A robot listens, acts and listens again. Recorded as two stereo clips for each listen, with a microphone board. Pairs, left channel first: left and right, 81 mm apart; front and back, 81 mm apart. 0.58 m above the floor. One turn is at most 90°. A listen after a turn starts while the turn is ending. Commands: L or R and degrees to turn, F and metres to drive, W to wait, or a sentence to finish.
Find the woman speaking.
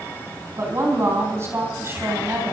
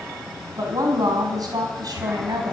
R90
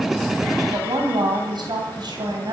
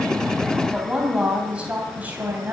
R90
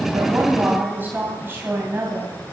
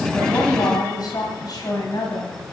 R35
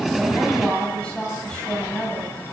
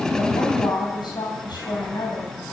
L10
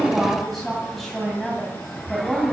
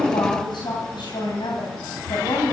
Found it: a woman speaking, straight ahead.